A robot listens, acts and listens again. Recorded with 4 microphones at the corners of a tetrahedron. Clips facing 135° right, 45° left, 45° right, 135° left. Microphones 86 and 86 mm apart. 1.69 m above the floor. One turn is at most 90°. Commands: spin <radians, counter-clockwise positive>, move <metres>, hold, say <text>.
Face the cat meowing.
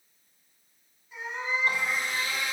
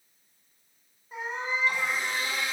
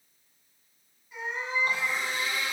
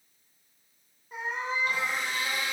spin 1.57
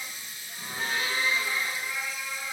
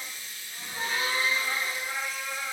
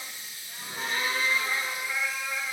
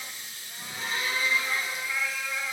spin 0.61
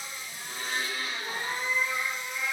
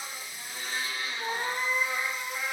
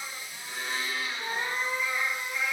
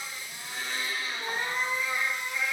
spin 0.70
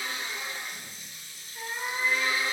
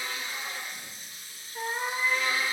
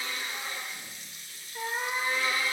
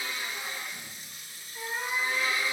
say Found it: a cat meowing, straight ahead, 1 to 2 m away.